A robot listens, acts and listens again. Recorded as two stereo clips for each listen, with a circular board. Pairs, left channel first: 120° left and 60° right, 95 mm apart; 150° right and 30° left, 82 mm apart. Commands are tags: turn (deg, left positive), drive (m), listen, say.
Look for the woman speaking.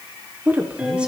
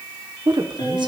<turn deg="15"/>
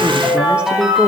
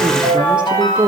<turn deg="25"/>
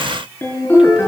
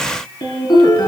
<listen/>
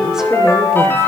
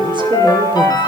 <listen/>
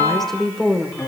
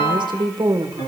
<turn deg="40"/>
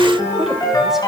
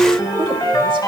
<listen/>
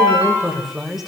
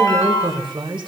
<turn deg="25"/>
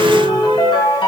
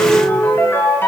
<listen/>
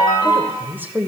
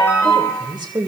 <turn deg="10"/>
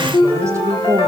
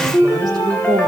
<say>Facing the woman speaking, 2 to 4 m away.</say>